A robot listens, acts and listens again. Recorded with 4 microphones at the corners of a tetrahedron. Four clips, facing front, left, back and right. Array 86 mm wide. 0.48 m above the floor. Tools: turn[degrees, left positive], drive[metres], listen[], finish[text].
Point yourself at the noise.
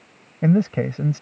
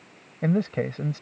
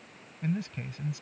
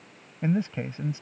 Thought: The man speaking: 30° left.
Action: turn[30]
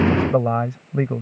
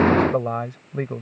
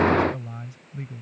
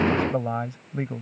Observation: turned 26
Thought: The man speaking is now 15° left.
Action: turn[15]
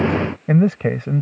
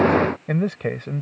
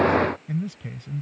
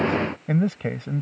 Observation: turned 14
Thought: The man speaking is now 10° left.
Action: turn[10]
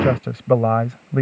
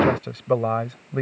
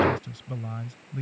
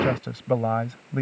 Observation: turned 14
Thought: The man speaking is now 10° left.
Action: turn[10]
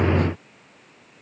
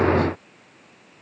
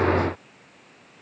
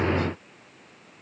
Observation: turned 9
Action: listen[]
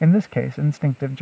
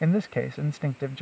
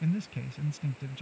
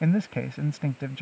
Thought: The man speaking is now 10° left.
Action: turn[10]
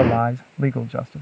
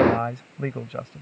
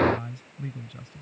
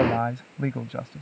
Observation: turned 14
Action: finish[Facing the man speaking.]